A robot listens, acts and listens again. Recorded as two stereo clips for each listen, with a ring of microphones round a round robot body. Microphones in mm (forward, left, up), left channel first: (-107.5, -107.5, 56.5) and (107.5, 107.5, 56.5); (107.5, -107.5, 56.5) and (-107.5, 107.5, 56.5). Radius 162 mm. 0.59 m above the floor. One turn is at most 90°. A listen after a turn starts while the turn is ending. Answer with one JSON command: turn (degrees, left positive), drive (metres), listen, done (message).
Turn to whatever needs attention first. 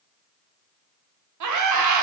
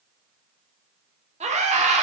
{"turn": 70}
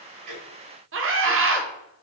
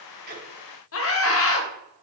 {"done": "Found it: a scream, straight ahead, 1 to 2 m away."}